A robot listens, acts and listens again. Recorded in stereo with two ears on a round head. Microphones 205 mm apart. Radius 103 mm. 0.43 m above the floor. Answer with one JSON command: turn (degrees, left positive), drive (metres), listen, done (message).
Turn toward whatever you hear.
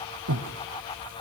{"turn": -90}
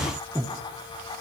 {"turn": -10}
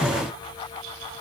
{"listen": true}
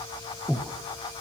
{"done": "Facing the breathing."}